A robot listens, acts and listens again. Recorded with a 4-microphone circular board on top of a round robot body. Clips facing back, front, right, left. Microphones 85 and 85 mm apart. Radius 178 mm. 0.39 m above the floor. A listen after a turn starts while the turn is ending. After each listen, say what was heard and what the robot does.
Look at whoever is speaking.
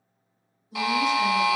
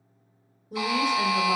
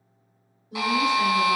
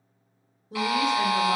The woman speaking: 35° left. Turn 35° left.
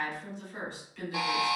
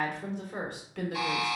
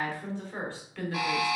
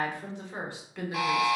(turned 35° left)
The woman speaking is now 15° left. Turn 15° left.
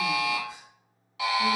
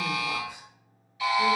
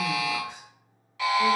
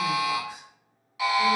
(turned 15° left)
Keep listening.
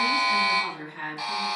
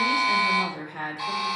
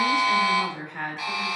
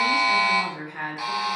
Facing the woman speaking.